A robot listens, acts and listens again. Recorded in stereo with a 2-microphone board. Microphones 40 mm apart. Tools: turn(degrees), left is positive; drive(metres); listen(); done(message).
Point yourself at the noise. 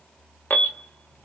turn(degrees=60)
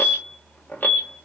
turn(degrees=60)
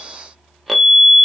done("Found it: an alarm, straight ahead.")